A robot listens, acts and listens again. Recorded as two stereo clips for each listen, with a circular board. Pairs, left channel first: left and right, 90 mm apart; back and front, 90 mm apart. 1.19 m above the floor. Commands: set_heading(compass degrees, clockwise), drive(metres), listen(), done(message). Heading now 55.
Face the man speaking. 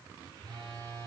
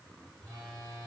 listen()
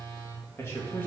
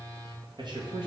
set_heading(30)
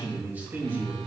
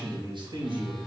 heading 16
set_heading(41)
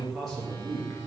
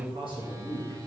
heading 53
done("Facing the man speaking.")